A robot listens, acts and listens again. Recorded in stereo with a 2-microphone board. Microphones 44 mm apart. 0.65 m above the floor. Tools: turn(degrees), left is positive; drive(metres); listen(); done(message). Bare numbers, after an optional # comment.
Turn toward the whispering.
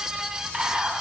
# The whispering: about 25° right or 155° right.
turn(-25)
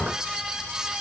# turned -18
listen()
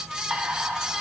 # So it is at 135° right.
turn(-135)
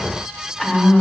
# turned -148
# The whispering is now 10° left.
turn(10)
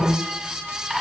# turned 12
done("Facing the whispering, over 4 m away.")